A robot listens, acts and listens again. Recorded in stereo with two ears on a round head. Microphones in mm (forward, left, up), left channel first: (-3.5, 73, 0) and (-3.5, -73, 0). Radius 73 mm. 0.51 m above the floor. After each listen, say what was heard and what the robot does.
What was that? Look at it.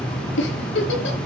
Turn 90° left.
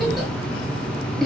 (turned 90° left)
Facing the giggle, over 4 m away.